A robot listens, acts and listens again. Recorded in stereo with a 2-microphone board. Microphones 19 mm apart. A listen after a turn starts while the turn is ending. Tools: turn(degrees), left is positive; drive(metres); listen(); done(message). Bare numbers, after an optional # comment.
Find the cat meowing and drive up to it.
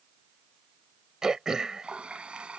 listen()
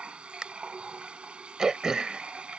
listen()
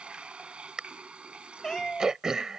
# The cat meowing: about 25° left or 155° left.
turn(25)
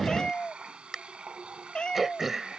# So it is at 130° left.
turn(130)
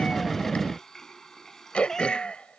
# The cat meowing is now 30° left.
turn(30)
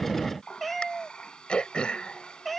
drive(1.0)
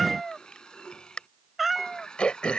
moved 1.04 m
drive(1.0)
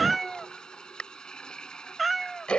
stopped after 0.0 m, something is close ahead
done("Arrived at the cat meowing, straight ahead.")